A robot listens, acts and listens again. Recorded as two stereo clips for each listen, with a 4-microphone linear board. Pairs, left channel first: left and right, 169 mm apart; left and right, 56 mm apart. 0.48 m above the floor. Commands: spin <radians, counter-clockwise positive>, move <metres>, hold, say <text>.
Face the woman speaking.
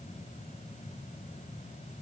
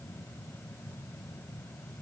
hold
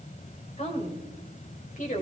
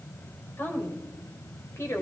spin 0.96
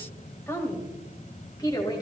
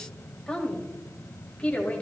spin 0.44
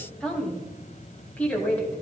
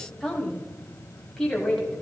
spin 0.17
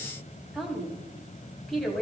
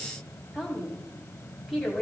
say Facing the woman speaking, 2 to 4 m away.